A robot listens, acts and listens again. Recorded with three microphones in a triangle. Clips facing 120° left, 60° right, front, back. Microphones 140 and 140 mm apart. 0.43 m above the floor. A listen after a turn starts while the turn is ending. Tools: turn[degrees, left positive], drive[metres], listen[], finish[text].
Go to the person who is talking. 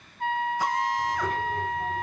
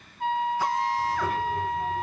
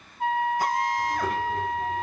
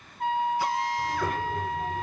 Thought: The child speaking: 145° right.
Action: turn[-145]
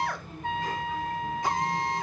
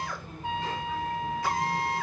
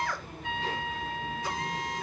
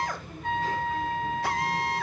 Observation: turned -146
Action: listen[]
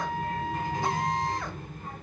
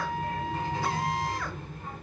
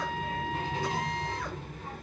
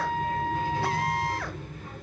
Action: drive[1.0]
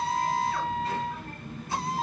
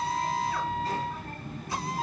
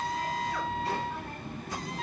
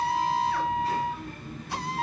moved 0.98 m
Action: drive[1.0]
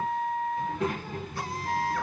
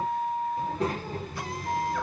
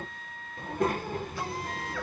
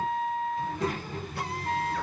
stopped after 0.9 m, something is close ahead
Thought: The child speaking is now 15° right.
Action: turn[-15]
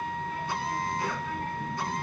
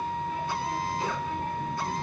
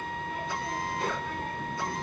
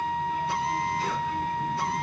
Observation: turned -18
Action: finish[I am next to the child speaking.]